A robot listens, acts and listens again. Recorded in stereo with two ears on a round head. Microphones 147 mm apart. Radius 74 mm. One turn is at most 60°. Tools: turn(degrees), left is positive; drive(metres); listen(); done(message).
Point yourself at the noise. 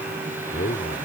turn(degrees=60)
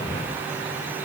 listen()
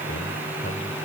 turn(degrees=60)
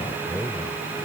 done("Facing the man speaking.")